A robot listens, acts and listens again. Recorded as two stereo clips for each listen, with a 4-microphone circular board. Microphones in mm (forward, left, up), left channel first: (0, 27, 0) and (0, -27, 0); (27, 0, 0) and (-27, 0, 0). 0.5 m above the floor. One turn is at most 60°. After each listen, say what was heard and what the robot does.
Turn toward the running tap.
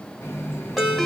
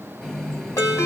The running tap: 85° left. Turn 60° left.
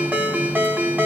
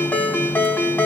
Nothing new. It was at 25° left. Turn 25° left.
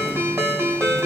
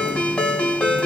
Keep listening.
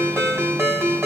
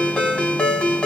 Facing where the running tap came from. I can't hear it now.